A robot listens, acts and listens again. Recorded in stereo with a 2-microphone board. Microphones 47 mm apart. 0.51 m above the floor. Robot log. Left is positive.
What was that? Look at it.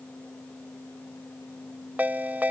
note: The ringtone: about 35° right or 145° right.
cmd yaw -35
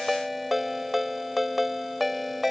end: Found it: a ringtone, straight ahead.